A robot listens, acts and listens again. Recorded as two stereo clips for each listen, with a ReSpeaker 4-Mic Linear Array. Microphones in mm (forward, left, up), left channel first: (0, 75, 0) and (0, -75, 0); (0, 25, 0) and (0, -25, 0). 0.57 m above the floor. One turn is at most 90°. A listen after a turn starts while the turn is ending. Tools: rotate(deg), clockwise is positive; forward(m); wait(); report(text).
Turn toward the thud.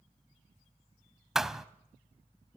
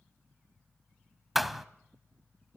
rotate(30)
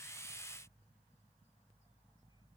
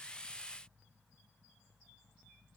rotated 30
wait()
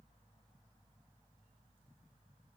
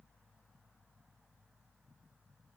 report("I heard a thud, but can't make it out now. It was about 25° left or 145° right.")